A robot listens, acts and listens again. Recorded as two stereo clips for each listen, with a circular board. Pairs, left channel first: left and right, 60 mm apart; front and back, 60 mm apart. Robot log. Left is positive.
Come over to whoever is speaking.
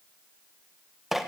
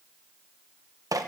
cmd idle
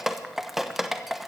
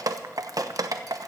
cmd idle
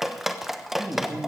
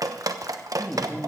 note: The man speaking: 70° right.
cmd yaw -70
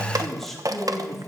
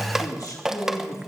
cmd fwd 1.0
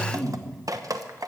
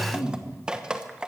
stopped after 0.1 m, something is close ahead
end: Blocked. The man speaking is further on, straight ahead.